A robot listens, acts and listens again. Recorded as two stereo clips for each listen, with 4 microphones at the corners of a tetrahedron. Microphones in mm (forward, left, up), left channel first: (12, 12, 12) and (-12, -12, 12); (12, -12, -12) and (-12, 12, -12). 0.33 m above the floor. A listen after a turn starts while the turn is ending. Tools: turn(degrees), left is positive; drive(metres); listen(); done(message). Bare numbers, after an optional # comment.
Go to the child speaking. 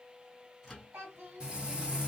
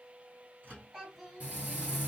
# The child speaking: 145° right.
turn(-145)
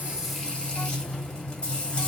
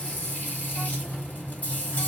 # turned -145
listen()
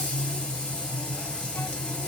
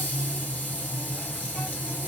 listen()
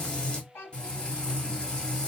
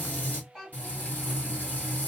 # The child speaking is now 35° left.
turn(35)
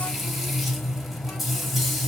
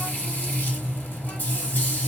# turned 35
listen()
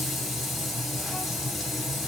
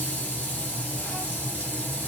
listen()
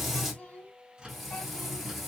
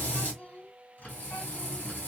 drive(1.0)
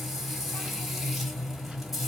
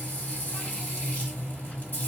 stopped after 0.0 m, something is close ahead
listen()
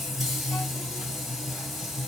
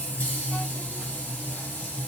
listen()
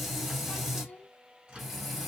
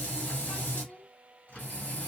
done("Blocked. The child speaking is further on, straight ahead.")